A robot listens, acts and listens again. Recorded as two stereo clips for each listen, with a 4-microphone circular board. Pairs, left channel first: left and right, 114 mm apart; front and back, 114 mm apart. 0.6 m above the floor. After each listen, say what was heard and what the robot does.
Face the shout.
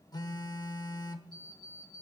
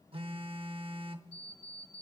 Keep listening.
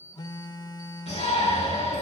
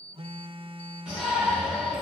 The shout: 100° left. Turn 100° left.
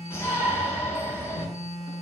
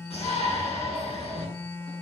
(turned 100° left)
The shout is now 25° left. Turn 25° left.
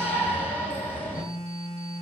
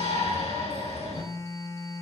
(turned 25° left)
The shout is now 15° left. Turn 15° left.
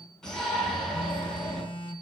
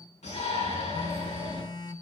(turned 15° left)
Found it: a shout, straight ahead.